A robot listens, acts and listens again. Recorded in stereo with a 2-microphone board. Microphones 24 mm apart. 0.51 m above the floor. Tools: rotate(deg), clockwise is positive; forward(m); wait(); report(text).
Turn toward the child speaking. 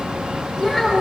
rotate(-30)
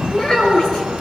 rotate(-145)
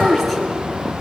rotate(-15)
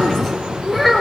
report("Facing the child speaking, over 4 m away.")